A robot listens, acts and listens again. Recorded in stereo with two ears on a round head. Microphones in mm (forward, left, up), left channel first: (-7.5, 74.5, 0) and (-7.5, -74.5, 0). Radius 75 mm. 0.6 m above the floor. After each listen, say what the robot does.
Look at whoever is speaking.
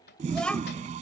Turn 30° left.
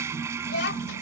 Turn 110° left.
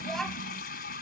Found it: a child speaking, straight ahead.